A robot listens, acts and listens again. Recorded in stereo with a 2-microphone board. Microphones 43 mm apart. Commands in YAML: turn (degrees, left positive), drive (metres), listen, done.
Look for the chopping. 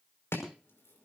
turn: 90
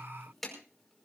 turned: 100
done: "Found it: chopping, straight ahead, over 4 m away."